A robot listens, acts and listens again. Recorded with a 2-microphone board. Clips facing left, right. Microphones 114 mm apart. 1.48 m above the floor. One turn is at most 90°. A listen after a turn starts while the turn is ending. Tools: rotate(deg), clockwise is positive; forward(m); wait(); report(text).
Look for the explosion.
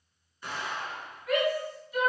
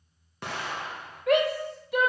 rotate(70)
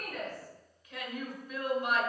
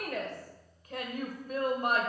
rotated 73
wait()
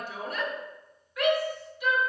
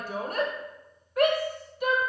report("I heard an explosion, but can't make it out now. It was about 5° left or 40° right.")